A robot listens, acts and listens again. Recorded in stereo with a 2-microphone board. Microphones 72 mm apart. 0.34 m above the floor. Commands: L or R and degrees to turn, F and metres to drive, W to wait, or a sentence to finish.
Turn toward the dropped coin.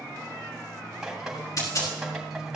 L50
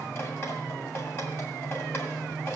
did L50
W
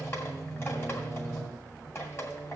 I heard a dropped coin, but can't make it out now. It was about straight ahead or 80° left.